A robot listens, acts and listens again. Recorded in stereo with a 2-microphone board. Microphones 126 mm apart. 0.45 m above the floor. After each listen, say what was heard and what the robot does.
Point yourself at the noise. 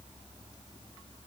Keep listening.
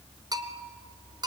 The bell: about 30° right or 150° right. Turn 30° right.
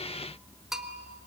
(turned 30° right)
Found it: a bell, straight ahead.